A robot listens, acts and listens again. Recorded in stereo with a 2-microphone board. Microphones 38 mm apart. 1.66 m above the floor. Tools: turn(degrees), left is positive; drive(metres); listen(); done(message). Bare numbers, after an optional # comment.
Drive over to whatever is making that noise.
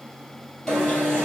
turn(30)
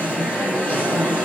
# So it is at 140° left.
turn(140)
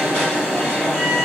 # The alarm is now 25° left.
turn(25)
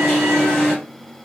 # The alarm is now 20° left.
turn(20)
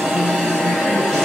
# The alarm is now 10° left.
turn(10)
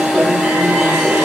drive(1.0)
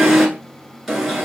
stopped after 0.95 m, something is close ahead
done("Arrived at the alarm, straight ahead.")